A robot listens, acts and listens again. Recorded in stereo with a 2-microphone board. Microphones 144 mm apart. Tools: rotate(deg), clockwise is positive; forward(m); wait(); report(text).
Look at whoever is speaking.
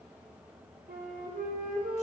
wait()
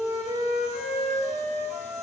wait()
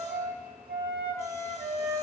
report("I can't make out anyone speaking to turn to.")